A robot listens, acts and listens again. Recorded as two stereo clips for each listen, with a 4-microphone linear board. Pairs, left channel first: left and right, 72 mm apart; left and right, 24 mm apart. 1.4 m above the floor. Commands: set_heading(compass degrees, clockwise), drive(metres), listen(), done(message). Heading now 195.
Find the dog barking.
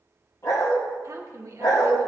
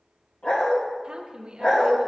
set_heading(140)
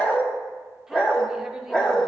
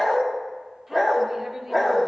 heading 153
set_heading(138)
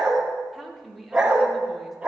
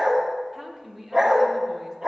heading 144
set_heading(159)
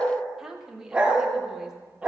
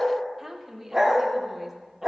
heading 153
set_heading(163)
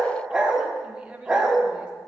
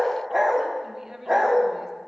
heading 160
done("Found it: a dog barking, straight ahead, 1 to 2 m away.")